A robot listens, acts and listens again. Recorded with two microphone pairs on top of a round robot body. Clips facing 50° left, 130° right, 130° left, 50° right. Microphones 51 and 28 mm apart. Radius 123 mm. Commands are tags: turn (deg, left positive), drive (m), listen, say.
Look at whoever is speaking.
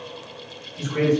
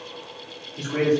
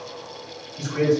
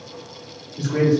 <turn deg="-80"/>
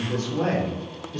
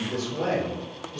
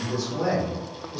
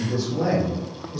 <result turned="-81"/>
<turn deg="40"/>
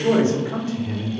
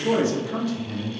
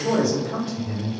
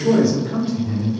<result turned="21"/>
<turn deg="40"/>
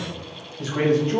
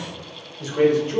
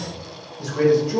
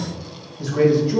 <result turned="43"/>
<turn deg="10"/>
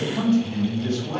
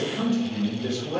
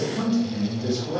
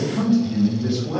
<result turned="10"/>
<say>Facing the man speaking.</say>